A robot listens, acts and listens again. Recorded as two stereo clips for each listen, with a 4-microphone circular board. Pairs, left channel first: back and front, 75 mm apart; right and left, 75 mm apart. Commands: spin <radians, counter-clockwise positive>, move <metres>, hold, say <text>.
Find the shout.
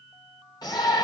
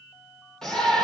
spin -3.05
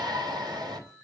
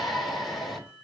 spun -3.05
say Found it: a shout, straight ahead, 2 to 4 m away.